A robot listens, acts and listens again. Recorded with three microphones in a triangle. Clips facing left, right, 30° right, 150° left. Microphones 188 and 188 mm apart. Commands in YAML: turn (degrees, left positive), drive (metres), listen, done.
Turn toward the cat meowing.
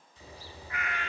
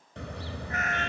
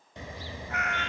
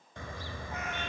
turn: -45
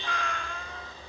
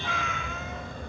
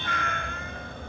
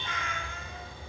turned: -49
done: "Found it: a cat meowing, straight ahead."